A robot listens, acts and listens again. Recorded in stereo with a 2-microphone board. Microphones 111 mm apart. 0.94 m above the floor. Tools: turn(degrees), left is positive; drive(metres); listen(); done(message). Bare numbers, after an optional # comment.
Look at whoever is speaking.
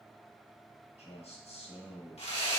# The man speaking: about 70° left or 110° left.
turn(70)
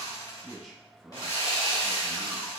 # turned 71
done("Facing the man speaking.")